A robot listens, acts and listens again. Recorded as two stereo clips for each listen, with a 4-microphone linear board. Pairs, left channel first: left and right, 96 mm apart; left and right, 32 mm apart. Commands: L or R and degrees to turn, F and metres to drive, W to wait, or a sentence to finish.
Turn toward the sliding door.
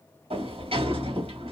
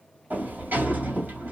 R90
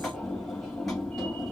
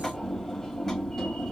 Found it: a sliding door, straight ahead, 2 to 4 m away.